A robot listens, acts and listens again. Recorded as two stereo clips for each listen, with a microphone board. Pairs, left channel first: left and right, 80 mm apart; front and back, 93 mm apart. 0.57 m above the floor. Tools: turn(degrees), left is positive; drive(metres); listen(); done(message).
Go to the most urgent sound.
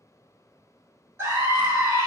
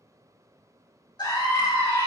turn(degrees=-35)
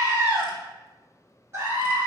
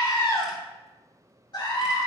turn(degrees=-30)
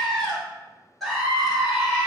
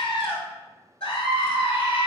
drive(metres=1.0)
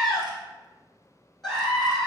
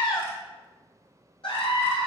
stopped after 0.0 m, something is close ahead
done("Blocked. The scream is further on, straight ahead.")